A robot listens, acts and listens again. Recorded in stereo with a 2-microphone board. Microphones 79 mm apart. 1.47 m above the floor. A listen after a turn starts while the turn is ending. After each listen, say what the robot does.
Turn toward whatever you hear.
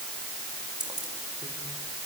Turn 60° right.
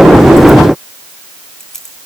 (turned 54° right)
Facing the keys jangling, over 4 m away.